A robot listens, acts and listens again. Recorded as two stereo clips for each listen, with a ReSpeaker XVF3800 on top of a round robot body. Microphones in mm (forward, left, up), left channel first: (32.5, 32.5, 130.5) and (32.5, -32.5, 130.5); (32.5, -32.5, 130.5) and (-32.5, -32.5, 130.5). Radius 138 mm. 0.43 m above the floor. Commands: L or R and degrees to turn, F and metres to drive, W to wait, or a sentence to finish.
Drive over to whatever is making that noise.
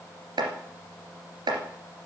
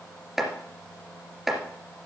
R95
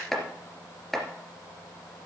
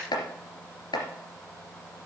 F1.0
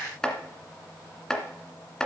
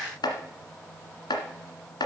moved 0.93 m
L10
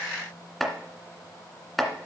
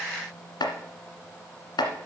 F1.0
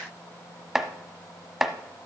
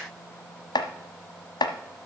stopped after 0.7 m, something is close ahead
Arrived at the chopping, straight ahead.